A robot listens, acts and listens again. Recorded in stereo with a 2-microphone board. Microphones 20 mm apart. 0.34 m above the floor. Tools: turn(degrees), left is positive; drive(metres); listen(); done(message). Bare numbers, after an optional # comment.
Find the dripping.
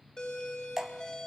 # The dripping: about 15° right or 165° right.
turn(-15)
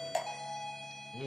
done("Found it: dripping, straight ahead.")